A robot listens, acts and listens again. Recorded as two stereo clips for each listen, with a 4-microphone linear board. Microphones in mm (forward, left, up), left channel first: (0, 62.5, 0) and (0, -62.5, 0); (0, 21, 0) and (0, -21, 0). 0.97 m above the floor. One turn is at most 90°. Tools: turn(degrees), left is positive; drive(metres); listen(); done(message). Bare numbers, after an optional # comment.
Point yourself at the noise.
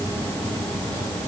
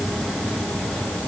listen()
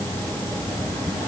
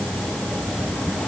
listen()
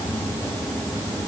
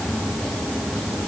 done("I can't make out anything to turn to.")